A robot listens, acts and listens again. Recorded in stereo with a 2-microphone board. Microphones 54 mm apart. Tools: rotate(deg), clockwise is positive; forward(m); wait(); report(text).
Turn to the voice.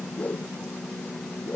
wait()
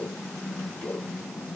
wait()
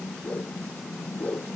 report("I can't make out anyone speaking to turn to.")